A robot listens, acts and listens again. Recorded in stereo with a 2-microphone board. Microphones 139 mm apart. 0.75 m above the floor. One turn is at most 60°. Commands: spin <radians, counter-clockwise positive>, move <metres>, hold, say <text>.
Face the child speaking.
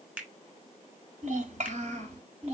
spin -0.87
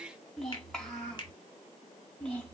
spin 0.17
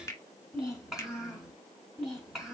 say Found it: a child speaking, straight ahead, over 4 m away.